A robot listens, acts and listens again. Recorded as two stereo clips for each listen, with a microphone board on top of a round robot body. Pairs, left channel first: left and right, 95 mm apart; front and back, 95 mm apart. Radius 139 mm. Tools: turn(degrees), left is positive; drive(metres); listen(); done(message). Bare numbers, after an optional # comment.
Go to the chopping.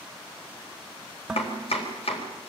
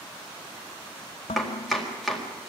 # The chopping: 90° left.
turn(90)
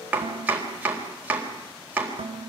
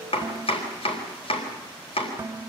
# The chopping is now 15° right.
turn(-15)
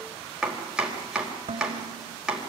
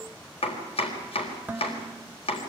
drive(1.0)
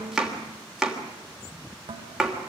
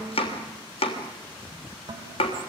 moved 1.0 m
drive(1.0)
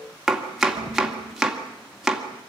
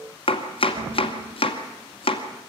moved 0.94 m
drive(1.0)
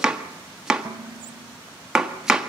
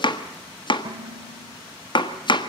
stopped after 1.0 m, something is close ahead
done("I am next to the chopping.")